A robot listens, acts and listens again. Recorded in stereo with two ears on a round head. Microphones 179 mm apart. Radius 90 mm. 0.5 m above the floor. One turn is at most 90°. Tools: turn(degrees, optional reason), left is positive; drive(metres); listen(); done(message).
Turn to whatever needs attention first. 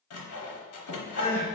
turn(degrees=40, reason="The crying: about 40° left or 140° left.")
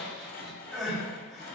done("Found it: crying, straight ahead.")